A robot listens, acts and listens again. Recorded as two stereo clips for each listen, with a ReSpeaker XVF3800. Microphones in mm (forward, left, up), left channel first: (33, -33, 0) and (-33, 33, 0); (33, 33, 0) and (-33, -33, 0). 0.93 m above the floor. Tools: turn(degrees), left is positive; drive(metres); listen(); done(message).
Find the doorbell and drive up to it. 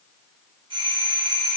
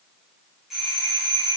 turn(degrees=140)
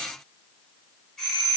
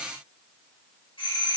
turn(degrees=40)
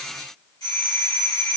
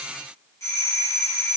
drive(metres=1.0)
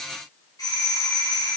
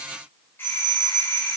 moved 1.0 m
turn(degrees=-15)
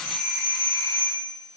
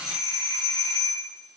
drive(metres=1.0)
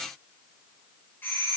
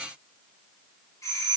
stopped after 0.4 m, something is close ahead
turn(degrees=10)
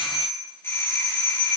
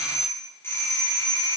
done("Arrived at the doorbell, straight ahead.")